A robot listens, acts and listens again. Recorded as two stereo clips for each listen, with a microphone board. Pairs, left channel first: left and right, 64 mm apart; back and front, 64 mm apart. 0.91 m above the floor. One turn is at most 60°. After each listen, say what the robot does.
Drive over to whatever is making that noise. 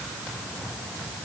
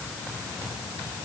Keep listening.
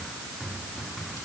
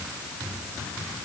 Keep listening.
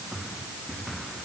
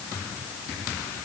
I can't make out anything.